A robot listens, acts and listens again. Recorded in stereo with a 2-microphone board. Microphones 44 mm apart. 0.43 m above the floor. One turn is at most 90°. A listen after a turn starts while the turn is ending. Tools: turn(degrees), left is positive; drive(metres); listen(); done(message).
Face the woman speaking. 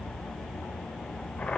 listen()
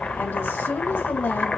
turn(degrees=55)
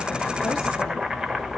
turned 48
listen()
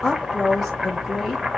done("Found it: a woman speaking, straight ahead.")